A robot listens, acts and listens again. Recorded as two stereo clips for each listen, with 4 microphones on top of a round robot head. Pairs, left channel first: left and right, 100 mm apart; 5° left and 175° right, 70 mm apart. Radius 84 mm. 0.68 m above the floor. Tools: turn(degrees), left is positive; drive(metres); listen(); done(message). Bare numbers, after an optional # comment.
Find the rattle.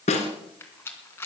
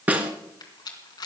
# The rattle: 25° left.
turn(25)
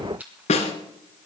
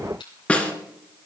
# The rattle is now 15° right.
turn(-15)
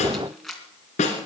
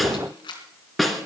done("Found it: a rattle, straight ahead.")